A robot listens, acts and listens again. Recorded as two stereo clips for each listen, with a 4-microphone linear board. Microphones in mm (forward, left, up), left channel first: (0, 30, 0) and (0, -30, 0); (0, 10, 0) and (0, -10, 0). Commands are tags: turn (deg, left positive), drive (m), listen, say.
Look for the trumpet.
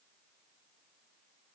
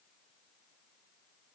<listen/>
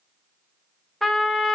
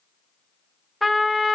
<turn deg="30"/>
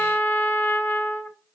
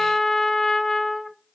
<turn deg="150"/>
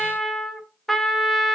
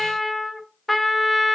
<turn deg="10"/>
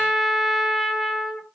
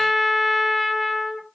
<say>Found it: a trumpet, straight ahead.</say>